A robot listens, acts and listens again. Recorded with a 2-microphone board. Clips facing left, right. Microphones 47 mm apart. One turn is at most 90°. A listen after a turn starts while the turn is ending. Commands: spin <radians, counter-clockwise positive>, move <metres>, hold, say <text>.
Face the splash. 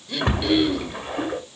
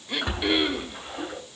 spin 0.87
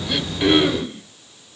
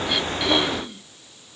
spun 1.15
hold
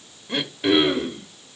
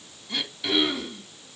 say I heard a splash, but can't make it out now. It was about 15° right or 65° left.